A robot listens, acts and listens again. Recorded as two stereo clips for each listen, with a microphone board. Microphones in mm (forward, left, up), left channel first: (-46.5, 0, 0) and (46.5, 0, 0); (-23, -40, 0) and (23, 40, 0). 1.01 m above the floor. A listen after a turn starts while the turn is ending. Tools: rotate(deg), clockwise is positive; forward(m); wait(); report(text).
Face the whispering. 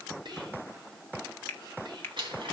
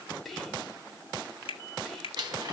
rotate(30)
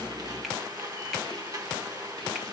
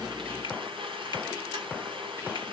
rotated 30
wait()
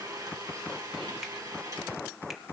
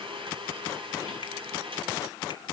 wait()
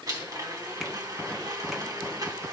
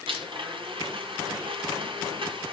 report("I heard whispering from this way, but can't make it out now.")